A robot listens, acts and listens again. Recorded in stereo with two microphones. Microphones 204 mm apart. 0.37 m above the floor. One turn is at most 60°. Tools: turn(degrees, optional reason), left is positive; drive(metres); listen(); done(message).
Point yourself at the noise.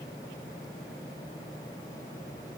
listen()
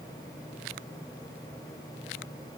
listen()
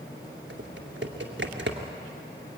turn(degrees=-60, reason="The typing on a keyboard: about 60° right or 120° right.")
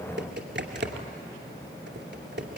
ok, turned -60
turn(degrees=-60, reason="So it is at 60° right.")
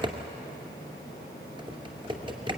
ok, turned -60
turn(degrees=-25, reason="The typing on a keyboard is now 25° right.")
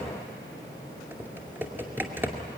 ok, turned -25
turn(degrees=-10, reason="The typing on a keyboard is now 10° right.")
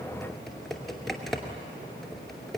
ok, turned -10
done("Found it: typing on a keyboard, straight ahead, 2 to 4 m away.")